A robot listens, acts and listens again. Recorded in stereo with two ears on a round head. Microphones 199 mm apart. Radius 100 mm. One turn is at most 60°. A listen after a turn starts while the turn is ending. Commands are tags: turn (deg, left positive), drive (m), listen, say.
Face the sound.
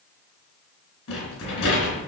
<turn deg="60"/>
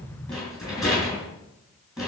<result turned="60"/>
<say>Facing the rattle.</say>